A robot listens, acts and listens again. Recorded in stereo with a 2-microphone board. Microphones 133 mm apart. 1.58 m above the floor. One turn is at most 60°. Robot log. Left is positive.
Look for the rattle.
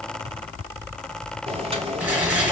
cmd yaw -30
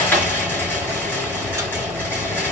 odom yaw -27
note: So it is at 15° left.
cmd yaw +15
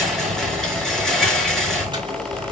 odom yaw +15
end: Found it: a rattle, straight ahead.